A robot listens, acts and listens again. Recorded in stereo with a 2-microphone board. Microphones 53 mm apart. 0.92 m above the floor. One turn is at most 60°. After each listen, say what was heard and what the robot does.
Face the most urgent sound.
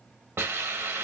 Keep listening.
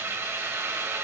Keep listening.
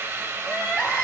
Turn 30° left.
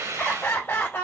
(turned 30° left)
So it is at 135° left. Turn 60° left.
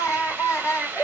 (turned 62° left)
The crying is now 75° left. Turn 60° left.
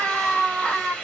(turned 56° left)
The crying is now 20° left. Turn 20° left.
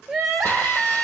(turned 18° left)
Found it: crying, straight ahead.